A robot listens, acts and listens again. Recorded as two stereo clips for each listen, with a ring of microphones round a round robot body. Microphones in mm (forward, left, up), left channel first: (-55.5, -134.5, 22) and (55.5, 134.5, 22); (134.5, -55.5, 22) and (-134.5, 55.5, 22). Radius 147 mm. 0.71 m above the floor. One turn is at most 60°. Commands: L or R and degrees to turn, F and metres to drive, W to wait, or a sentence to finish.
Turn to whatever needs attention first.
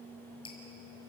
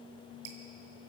W
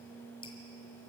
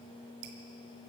W
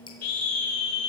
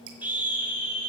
R60
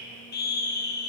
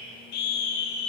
R55
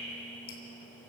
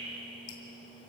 W
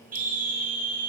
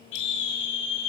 Facing the scream.